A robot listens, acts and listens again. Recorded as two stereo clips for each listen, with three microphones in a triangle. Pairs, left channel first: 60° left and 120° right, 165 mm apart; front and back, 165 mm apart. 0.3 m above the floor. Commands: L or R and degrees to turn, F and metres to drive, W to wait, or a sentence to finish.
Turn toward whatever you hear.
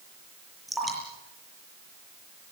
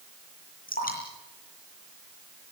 R30
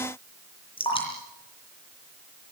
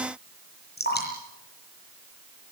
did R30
Found it: dripping, straight ahead, over 4 m away.